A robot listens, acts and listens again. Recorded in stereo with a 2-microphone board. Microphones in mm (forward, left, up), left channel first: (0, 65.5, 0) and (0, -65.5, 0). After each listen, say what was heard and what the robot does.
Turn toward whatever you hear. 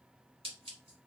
The scissors: about 45° right or 135° right. Turn 45° right.
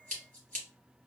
So it is at 90° right. Turn 90° right.
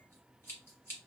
The scissors is now 20° left. Turn 20° left.
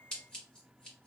Facing the scissors.